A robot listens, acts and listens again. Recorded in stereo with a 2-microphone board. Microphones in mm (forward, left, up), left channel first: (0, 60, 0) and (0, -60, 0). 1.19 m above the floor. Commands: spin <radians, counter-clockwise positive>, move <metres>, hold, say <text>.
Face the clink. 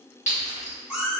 spin 1.57
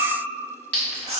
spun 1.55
spin 0.17
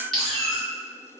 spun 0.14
say Facing the clink, 1 to 2 m away.